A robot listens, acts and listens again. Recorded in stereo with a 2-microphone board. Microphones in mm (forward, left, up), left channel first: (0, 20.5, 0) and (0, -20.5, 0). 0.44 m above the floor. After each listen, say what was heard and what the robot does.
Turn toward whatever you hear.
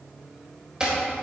The chopping: about 20° right or 160° right. Turn 20° right.
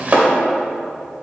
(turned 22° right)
So it is at 130° right. Turn 130° right.
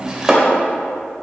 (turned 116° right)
The chopping is now 15° right. Turn 15° right.
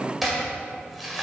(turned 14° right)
Facing the chopping, 1 to 2 m away.